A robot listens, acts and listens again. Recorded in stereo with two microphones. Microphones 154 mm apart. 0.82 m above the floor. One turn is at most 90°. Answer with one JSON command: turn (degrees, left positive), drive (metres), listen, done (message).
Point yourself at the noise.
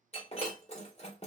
{"turn": 40}
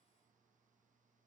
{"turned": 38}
{"listen": true}
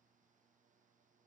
{"done": "I heard breaking glass, but can't make it out now. It was about straight ahead or 100° left."}